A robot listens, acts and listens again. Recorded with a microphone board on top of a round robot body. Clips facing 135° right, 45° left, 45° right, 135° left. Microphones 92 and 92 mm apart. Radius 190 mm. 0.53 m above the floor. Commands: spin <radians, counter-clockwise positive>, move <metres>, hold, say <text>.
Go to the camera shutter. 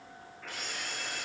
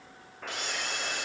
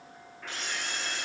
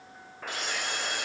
spin 0.96
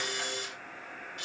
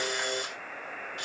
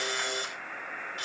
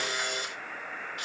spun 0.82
spin 0.17
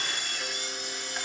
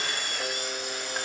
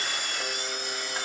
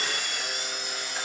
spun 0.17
move 1.0
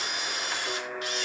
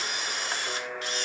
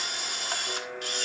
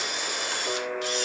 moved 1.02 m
spin -0.17
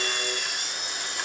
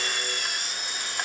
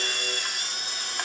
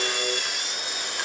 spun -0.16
move 1.0
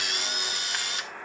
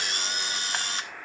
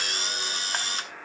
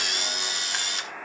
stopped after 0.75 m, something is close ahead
say Arrived at the camera shutter, straight ahead.